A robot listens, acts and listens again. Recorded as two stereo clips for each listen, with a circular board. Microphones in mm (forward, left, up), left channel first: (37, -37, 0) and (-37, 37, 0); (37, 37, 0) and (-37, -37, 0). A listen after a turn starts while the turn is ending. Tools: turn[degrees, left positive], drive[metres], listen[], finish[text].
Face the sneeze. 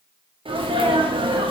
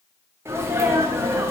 Thought: The sneeze: 160° left.
Action: turn[160]
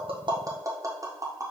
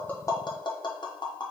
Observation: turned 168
Action: finish[Facing where the sneeze came from. I can't hear it now.]